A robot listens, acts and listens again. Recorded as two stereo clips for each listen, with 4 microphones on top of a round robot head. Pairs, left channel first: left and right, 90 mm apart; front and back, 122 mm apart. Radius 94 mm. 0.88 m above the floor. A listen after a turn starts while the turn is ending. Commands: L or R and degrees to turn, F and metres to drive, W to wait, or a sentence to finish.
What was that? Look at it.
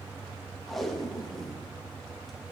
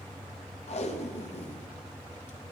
Found it: tape being pulled, straight ahead.